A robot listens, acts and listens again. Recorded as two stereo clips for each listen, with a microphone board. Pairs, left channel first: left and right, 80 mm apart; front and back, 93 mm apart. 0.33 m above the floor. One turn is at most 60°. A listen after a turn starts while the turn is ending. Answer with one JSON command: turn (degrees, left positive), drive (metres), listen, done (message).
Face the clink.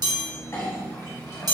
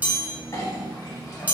{"turn": 45}
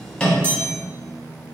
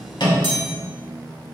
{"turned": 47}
{"listen": true}
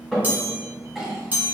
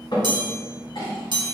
{"done": "Found it: a clink, straight ahead, 1 to 2 m away."}